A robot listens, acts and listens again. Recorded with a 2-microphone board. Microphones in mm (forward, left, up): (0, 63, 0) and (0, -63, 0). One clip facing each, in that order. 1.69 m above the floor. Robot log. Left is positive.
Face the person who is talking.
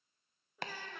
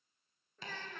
cmd yaw +30
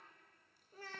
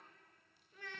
note: So it is at 140° left.
cmd yaw +140
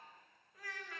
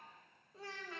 note: The child speaking is now 30° right.
cmd yaw -30
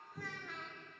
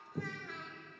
end: Facing the child speaking, 1 to 2 m away.